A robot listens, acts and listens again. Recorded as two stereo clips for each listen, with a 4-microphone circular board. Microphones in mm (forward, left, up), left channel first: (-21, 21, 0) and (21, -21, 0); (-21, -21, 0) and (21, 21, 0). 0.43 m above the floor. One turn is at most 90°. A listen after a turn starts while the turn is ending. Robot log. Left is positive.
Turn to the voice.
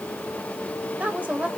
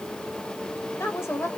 note: The woman speaking: 110° right.
cmd yaw -90
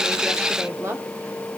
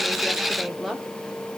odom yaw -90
note: The woman speaking is now 45° right.
cmd yaw -45
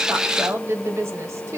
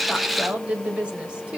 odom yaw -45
note: The woman speaking is now 25° right.
cmd yaw -25
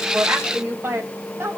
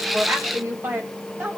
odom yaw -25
end: Facing the woman speaking.